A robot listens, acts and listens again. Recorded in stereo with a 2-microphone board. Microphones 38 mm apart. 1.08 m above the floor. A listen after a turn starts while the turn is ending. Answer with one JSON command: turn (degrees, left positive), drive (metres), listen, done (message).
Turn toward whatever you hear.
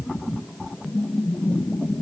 {"listen": true}
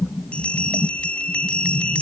{"turn": 30}
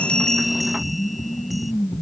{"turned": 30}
{"listen": true}
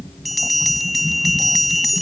{"done": "Facing the bell."}